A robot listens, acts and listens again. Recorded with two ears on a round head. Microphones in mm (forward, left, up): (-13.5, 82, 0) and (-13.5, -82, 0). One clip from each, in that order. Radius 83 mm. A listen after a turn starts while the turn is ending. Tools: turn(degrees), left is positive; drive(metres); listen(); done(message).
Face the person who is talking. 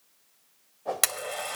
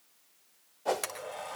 listen()
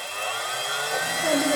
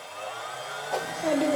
turn(degrees=-90)
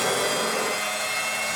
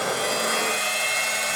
listen()
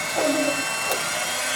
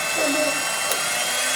listen()
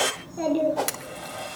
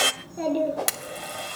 done("Facing the child speaking, over 4 m away.")